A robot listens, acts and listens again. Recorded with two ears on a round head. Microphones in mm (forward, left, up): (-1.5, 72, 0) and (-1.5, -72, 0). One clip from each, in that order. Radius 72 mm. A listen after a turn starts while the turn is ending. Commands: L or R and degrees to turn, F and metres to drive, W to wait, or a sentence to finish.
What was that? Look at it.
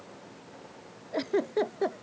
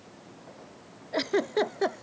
R40
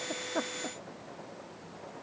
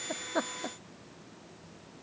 W
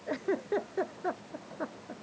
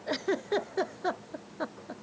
R100
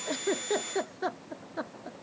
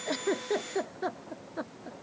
L15
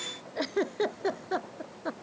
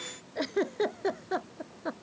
Facing the giggle.